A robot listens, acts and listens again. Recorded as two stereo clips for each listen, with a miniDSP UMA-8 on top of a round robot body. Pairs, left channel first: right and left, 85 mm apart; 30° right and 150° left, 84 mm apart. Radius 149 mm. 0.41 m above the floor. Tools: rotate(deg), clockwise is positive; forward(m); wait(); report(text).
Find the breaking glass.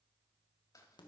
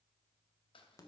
wait()
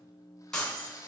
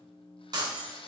rotate(170)
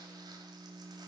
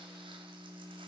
report("I heard breaking glass from this way, but can't make it out now.")